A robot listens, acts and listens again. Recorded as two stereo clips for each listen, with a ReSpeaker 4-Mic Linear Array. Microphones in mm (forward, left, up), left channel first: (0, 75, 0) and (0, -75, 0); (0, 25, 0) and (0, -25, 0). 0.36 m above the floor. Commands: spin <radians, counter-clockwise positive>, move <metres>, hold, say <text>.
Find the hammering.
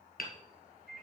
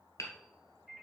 spin 1.57
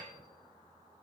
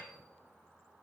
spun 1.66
hold
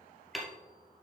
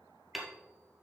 say Facing the hammering, 1 to 2 m away.